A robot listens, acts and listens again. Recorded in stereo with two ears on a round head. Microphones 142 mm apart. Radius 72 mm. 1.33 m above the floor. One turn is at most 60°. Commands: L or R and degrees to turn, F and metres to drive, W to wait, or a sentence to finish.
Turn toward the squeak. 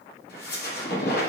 L60
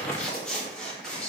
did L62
Facing the squeak, 1 to 2 m away.